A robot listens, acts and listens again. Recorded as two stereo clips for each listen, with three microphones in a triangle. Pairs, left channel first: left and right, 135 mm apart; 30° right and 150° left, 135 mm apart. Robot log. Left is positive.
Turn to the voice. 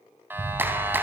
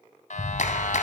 cmd idle
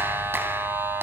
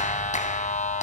cmd idle
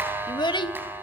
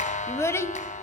note: The child speaking: 40° left.
cmd yaw +40
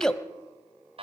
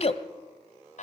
end: Found it: a child speaking, straight ahead.